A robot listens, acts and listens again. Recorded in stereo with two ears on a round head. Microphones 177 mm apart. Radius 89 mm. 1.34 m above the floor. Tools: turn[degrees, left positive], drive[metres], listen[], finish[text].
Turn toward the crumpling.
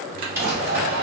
Action: turn[-30]
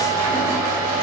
Action: listen[]
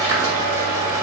Action: listen[]
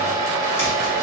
Action: finish[I heard crumpling, but can't make it out now. It was about 15° left or 135° right.]